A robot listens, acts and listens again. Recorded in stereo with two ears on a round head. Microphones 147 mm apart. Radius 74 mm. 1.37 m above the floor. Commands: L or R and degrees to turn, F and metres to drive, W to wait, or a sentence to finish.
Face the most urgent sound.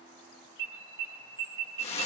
R25
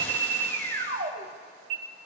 R130
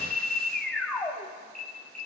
Facing the alarm.